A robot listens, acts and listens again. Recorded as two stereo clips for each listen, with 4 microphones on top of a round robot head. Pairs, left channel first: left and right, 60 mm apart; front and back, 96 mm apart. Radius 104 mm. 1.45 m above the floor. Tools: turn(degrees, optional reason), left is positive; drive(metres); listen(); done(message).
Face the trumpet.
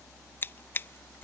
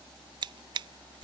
listen()
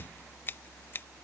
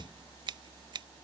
listen()
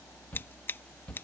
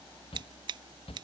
done("I can't make out a trumpet to turn to.")